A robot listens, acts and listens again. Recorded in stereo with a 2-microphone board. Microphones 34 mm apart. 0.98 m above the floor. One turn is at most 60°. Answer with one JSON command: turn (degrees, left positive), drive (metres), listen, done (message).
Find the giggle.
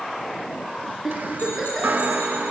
{"turn": -30}
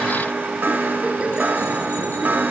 {"listen": true}
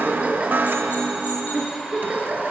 {"turn": -60}
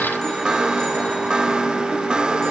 {"turn": -60}
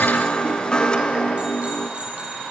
{"turn": -20}
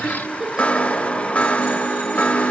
{"turn": -15}
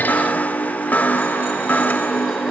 {"listen": true}
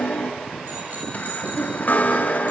{"listen": true}
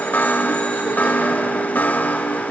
{"done": "I heard a giggle from this way, but can't make it out now."}